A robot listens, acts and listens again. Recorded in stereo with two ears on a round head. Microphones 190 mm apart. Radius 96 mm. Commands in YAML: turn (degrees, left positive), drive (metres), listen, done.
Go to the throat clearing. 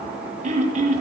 turn: -35
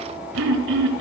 turn: -110
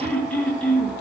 drive: 1.0
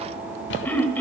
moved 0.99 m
drive: 1.0
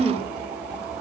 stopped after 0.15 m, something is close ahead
done: "I am next to the throat clearing."